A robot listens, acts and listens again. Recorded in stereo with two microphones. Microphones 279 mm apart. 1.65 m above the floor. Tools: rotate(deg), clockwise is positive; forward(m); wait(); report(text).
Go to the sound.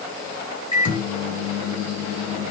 rotate(-90)
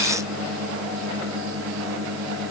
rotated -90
forward(1.0)
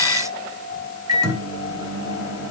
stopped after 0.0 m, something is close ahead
rotate(10)
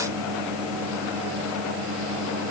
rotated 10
report("Something is in my way. I am facing the microwave but have not reached it.")